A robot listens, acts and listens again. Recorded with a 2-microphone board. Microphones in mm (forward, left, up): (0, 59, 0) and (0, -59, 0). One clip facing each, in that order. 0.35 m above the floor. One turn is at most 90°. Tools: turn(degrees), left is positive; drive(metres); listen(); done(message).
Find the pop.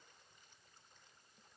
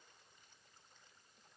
listen()
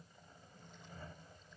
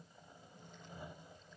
listen()
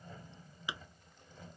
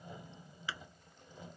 turn(degrees=15)
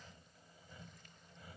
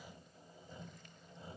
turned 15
listen()
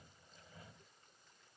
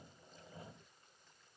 done("I heard a pop, but can't make it out now. It was about straight ahead or 150° left.")